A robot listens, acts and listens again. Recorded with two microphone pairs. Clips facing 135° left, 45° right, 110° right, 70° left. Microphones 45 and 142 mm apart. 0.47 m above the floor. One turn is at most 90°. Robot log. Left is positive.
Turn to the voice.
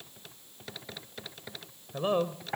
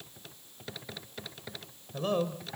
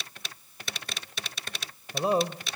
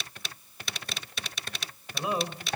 note: The man speaking: 155° right.
cmd yaw -90
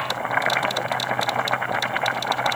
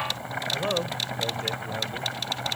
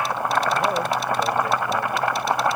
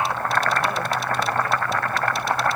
note: Nothing new. It was at 65° right.
cmd yaw -65
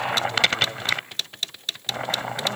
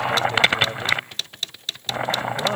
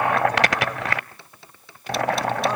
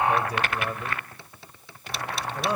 cmd idle
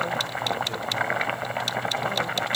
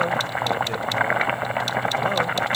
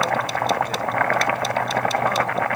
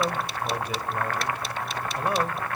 end: Facing where the man speaking came from. I can't hear it now.